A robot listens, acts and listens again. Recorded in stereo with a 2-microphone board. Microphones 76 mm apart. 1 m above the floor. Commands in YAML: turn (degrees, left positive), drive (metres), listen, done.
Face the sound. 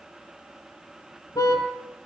turn: 55
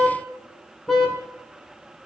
done: "Facing the car horn, over 4 m away."